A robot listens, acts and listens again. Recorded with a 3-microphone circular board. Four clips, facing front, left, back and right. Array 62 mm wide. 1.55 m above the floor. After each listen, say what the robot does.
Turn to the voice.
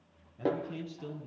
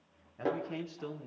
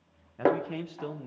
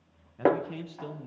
Turn 165° left.
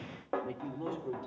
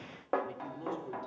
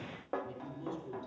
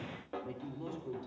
Found it: a man speaking, straight ahead, 2 to 4 m away.